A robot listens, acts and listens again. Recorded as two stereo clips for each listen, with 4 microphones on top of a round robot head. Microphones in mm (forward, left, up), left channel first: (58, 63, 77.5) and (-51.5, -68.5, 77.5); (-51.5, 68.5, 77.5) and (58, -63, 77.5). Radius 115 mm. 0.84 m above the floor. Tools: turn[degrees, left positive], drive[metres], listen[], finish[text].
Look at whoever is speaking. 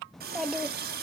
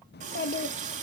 Thought: The child speaking: 140° left.
Action: turn[140]
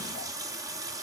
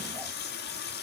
Action: listen[]
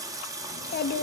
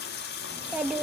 Thought: The child speaking is now 35° left.
Action: turn[35]
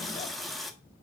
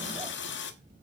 Action: listen[]
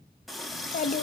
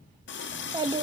Thought: The child speaking is now 15° left.
Action: turn[15]
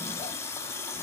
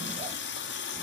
Action: listen[]
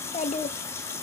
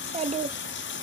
Action: finish[Facing the child speaking.]